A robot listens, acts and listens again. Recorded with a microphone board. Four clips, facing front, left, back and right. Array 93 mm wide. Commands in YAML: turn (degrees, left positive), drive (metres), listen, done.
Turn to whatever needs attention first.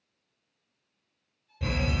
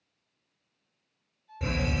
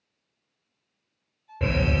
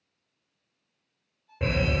turn: -145
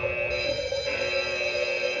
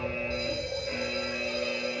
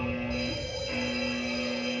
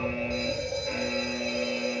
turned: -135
turn: -10
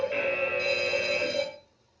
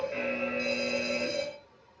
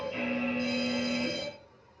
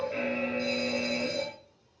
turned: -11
done: "Found it: a fire alarm, straight ahead."